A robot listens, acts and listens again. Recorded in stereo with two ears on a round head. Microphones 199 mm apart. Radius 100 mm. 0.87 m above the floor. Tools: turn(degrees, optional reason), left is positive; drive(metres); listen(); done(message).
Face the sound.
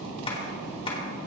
turn(degrees=25, reason="The tapping: about 25° left or 155° left.")
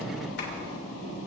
listen()
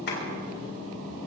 turn(degrees=125, reason="So it is at 125° left.")
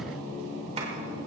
listen()
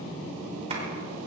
listen()
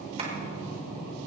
turn(degrees=-30, reason="The tapping is now 30° right.")
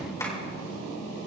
turn(degrees=15, reason="The tapping is now 15° left.")
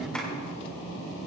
listen()
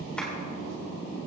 listen()
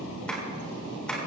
done("Facing the tapping.")